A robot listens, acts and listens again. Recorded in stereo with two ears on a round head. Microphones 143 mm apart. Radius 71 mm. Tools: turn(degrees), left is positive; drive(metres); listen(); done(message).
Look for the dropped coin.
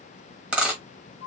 turn(degrees=-30)
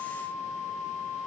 listen()
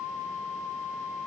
done("I heard a dropped coin, but can't make it out now. It was about 20° left or 140° right.")